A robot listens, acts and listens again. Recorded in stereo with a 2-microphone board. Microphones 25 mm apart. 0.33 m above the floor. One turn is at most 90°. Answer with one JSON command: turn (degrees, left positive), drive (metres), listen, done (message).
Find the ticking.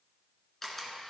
{"listen": true}
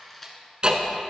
{"turn": -35}
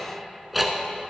{"done": "Facing the ticking."}